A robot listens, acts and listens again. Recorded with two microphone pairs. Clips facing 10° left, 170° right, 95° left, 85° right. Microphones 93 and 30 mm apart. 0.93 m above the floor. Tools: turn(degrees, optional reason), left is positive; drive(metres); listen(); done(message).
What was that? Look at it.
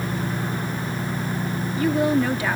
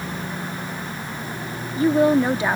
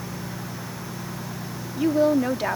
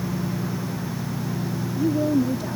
turn(degrees=125, reason="The woman speaking: 125° left.")
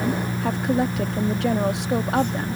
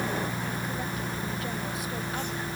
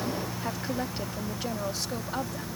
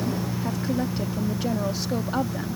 listen()
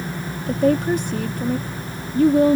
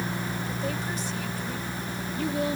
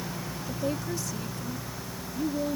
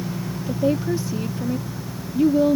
turn(degrees=-35, reason="The woman speaking is now 35° right.")
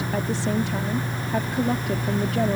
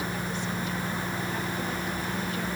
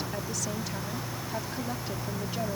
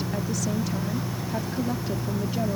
listen()
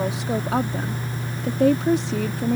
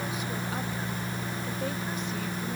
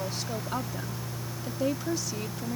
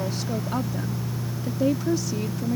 done("Facing the woman speaking.")